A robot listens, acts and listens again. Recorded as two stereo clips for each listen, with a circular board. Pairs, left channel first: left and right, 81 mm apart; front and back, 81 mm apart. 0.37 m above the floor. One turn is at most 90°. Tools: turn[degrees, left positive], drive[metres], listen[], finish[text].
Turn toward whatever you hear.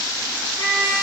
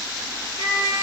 Thought: The trumpet: 30° right.
Action: turn[-30]
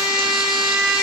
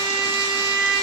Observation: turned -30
Action: finish[Facing the trumpet.]